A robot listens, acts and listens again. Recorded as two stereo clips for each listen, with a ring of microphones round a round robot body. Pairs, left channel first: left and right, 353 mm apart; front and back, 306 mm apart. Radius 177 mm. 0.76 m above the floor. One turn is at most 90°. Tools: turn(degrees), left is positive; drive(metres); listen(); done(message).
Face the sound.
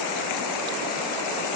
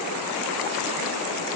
listen()
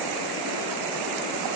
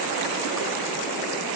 listen()
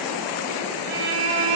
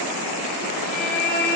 turn(degrees=-65)
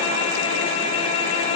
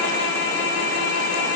turn(degrees=15)
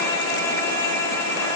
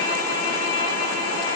turn(degrees=10)
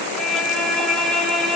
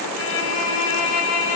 done("Facing the violin, 1 to 2 m away.")